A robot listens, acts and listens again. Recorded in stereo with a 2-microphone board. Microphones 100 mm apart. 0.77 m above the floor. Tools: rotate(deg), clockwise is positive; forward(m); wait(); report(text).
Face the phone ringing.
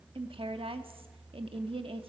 wait()
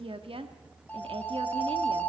rotate(-30)
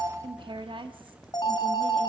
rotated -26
rotate(-135)
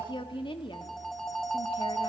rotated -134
report("Found it: a phone ringing, straight ahead.")